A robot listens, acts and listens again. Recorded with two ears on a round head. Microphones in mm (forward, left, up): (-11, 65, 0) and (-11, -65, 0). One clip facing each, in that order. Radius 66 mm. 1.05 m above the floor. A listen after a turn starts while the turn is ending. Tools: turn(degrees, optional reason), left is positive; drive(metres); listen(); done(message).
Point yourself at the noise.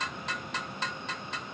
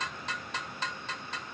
listen()
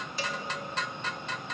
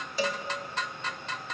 turn(degrees=-70, reason="The cowbell: about 70° right or 110° right.")
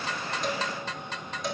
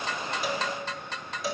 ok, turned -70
done("Found it: a cowbell, straight ahead.")